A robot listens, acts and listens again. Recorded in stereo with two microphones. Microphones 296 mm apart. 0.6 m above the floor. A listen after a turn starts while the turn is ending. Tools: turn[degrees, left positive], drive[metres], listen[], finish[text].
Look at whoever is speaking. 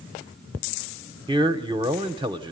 Thought: The man speaking: about 15° right or 165° right.
Action: turn[-15]
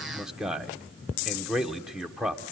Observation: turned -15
Action: finish[Facing the man speaking.]